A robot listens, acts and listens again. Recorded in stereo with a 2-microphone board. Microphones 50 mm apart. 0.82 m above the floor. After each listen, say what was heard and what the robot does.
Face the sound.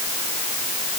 Keep listening.
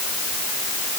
Keep listening.
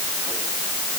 I can't make out anything to turn to.